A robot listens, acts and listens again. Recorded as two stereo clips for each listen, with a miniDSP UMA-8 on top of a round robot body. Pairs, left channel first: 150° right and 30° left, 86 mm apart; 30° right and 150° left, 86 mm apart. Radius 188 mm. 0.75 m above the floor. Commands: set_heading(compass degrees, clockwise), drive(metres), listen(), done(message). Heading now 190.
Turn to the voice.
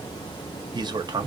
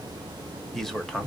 set_heading(135)
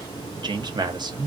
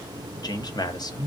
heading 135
done("Facing the man speaking.")